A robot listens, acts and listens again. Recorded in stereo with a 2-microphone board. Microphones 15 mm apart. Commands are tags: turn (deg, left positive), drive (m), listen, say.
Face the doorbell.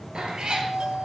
<turn deg="-90"/>
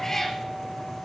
<listen/>
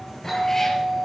<say>Facing the doorbell, over 4 m away.</say>